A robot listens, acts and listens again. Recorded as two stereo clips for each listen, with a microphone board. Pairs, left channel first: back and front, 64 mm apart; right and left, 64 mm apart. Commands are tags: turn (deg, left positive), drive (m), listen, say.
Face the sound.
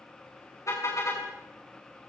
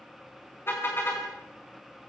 <turn deg="-145"/>
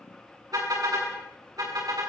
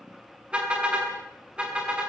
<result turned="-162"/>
<turn deg="15"/>
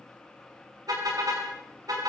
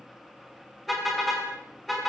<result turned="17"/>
<say>Facing the car horn.</say>